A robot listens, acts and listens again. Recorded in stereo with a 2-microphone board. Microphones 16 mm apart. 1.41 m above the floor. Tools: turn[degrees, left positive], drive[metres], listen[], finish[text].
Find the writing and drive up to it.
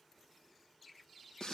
Action: listen[]
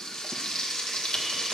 Action: listen[]
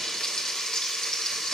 Action: finish[I can't make out writing to turn to.]